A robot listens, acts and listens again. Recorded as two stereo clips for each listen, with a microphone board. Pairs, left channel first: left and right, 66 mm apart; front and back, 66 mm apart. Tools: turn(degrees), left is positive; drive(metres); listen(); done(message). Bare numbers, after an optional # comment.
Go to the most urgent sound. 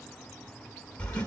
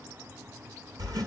listen()
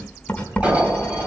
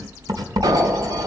# The alarm: 160° right.
turn(-160)
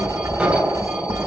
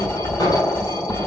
# The alarm is now 15° right.
turn(-15)
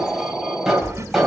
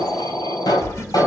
drive(1.0)
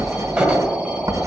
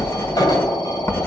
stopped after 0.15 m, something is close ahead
# The alarm is now 15° right.
turn(-15)
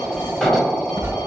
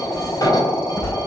done("Blocked. The alarm is further on, straight ahead.")